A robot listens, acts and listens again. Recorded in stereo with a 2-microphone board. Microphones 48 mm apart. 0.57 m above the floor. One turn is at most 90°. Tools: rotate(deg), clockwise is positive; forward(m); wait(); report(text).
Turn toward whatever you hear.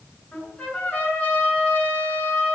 rotate(-35)
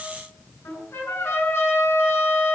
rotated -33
rotate(-90)
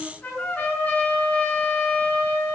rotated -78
rotate(-30)
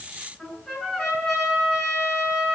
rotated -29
report("Found it: a trumpet, straight ahead, over 4 m away.")